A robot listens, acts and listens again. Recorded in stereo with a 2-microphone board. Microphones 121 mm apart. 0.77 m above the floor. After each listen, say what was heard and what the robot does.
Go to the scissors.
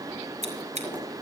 The scissors: about 70° right or 110° right. Turn 70° right.
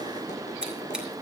So it is at 10° right. Turn 10° right.
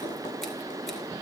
Keep listening.
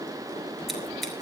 Keep listening.
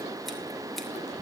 I heard scissors from this way, but can't make it out now. I did not reach it.